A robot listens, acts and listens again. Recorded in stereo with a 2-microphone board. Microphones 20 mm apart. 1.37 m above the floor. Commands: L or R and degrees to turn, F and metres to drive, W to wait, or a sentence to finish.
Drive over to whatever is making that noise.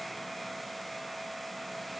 W
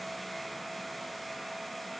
W
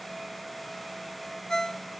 L30
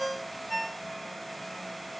F1.0
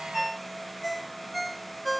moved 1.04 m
F1.0
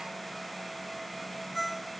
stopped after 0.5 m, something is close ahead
Blocked. The ringtone is further on, straight ahead.